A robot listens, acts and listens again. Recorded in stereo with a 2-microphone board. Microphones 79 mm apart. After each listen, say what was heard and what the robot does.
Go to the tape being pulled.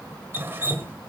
Keep listening.
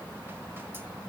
Keep listening.
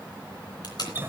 The tape being pulled: about 60° left or 120° left. Turn 60° left.
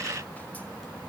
Keep listening.
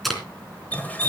Drive 1.0 m forward.
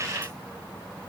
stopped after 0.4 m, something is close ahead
Keep listening.
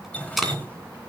Something is in my way. I am facing the tape being pulled but have not reached it.